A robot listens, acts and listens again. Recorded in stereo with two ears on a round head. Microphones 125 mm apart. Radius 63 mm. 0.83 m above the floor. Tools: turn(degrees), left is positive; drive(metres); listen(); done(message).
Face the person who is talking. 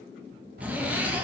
turn(degrees=-70)
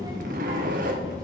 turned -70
turn(degrees=-30)
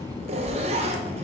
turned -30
turn(degrees=15)
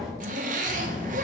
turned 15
done("Facing the child speaking.")